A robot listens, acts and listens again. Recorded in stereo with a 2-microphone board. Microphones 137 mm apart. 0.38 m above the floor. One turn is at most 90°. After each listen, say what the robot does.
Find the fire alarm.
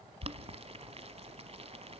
Keep listening.
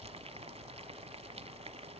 Keep listening.
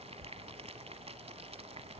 I can't make out a fire alarm, only boiling.